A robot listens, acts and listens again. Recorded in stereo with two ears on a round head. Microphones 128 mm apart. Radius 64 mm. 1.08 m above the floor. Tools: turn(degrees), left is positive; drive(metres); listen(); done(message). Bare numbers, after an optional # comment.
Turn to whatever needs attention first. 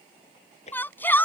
turn(30)
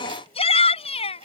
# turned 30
# So it is at 140° left.
turn(140)
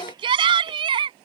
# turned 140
# The shout is now 35° right.
turn(-35)
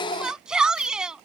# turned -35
done("Facing the shout.")